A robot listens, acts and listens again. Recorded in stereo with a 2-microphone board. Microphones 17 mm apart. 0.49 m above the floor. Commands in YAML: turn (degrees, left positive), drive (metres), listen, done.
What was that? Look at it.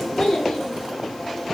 turn: 55
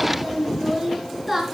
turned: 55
turn: -10
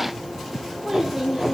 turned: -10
turn: -15
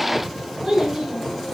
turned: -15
turn: -15
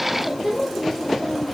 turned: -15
done: "Facing the child speaking, 2 to 4 m away."